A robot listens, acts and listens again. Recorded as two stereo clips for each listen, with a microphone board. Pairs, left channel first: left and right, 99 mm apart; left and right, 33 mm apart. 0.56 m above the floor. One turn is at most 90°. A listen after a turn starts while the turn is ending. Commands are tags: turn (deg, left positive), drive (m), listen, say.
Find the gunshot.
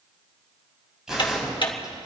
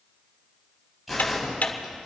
<turn deg="-30"/>
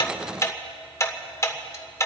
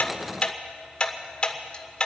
<listen/>
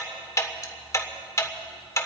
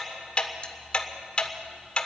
<say>I heard a gunshot, but can't make it out now. It was about 25° left or 145° right.</say>